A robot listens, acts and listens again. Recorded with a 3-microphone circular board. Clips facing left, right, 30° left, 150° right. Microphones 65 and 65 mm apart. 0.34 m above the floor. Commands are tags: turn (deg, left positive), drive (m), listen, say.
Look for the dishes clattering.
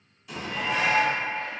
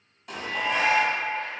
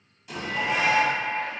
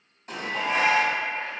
<turn deg="-110"/>
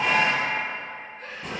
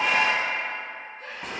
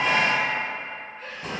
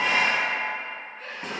<say>Facing the dishes clattering.</say>